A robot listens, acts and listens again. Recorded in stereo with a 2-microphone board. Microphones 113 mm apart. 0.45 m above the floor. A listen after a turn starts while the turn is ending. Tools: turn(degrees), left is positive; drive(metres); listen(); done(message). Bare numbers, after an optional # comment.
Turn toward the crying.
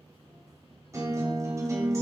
listen()
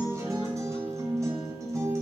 listen()
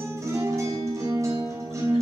done("I can't make out crying to turn to.")